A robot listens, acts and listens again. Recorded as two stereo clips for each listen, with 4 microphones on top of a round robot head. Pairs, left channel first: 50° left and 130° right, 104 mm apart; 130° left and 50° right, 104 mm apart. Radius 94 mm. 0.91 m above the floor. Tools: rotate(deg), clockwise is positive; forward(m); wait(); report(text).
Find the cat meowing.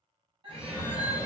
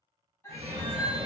rotate(165)
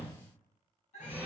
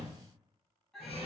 rotate(-45)
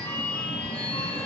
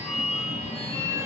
wait()
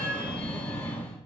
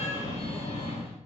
wait()
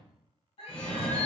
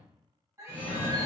rotate(-15)
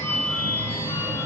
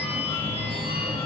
wait()
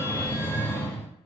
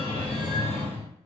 wait()
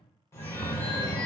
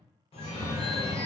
report("I heard a cat meowing from this way, but can't make it out now.")